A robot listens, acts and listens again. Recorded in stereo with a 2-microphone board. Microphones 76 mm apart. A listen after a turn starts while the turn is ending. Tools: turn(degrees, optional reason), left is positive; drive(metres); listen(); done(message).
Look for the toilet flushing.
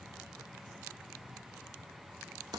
listen()
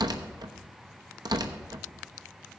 listen()
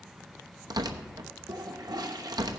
turn(degrees=-60, reason="The toilet flushing: about 60° right or 120° right.")
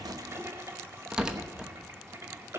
turn(degrees=-40, reason="So it is at 40° right.")
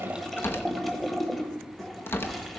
done("Facing the toilet flushing, 1 to 2 m away.")